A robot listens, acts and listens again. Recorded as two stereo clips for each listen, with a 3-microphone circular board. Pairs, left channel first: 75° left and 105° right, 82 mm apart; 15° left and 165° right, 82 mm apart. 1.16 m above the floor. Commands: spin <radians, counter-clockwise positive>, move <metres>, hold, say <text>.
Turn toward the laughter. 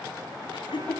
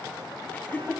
spin 1.40
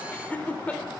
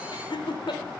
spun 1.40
say Facing the laughter.